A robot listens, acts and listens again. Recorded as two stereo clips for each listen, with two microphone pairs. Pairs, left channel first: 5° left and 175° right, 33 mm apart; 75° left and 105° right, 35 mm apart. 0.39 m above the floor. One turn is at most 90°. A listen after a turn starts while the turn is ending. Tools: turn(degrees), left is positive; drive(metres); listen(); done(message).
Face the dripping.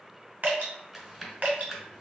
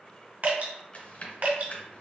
turn(degrees=-90)
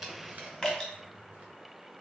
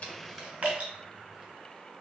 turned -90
turn(degrees=-55)
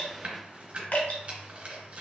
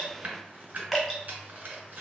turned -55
turn(degrees=-15)
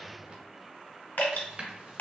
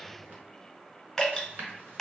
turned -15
done("Found it: dripping, straight ahead, 1 to 2 m away.")